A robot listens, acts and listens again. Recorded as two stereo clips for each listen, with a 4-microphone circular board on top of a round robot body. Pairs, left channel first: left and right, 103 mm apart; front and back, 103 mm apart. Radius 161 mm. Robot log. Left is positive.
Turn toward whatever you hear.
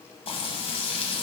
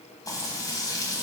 note: The frying: 60° left.
cmd yaw +60
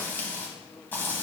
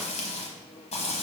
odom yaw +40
note: The frying is now 15° left.
cmd yaw +15
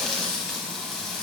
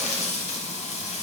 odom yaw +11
end: Found it: frying, straight ahead, 1 to 2 m away.